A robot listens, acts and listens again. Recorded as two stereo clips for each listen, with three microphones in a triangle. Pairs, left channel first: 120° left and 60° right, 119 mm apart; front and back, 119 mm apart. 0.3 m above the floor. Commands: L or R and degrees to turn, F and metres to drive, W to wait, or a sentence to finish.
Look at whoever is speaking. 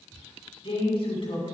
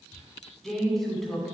L90
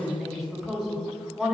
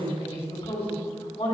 L25
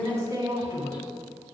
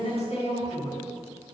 Found it: a woman speaking, straight ahead.